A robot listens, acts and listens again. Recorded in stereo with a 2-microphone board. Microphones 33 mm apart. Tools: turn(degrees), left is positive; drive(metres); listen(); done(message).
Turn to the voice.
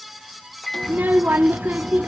turn(degrees=-70)
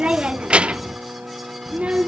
turn(degrees=-35)
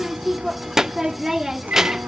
turn(degrees=-15)
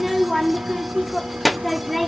done("Facing the child speaking, under 1 m away.")